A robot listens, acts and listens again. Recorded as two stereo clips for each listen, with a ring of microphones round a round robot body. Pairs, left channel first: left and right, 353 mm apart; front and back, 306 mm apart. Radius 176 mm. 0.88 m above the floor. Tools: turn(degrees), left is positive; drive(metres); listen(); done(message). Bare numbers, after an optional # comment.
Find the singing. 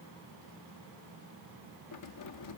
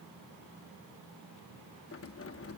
listen()
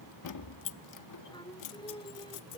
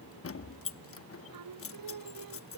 # The singing: 165° left.
turn(165)
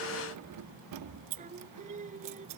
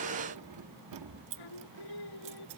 # The singing is now 20° right.
turn(-20)
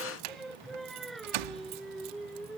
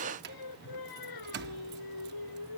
done("Facing the singing.")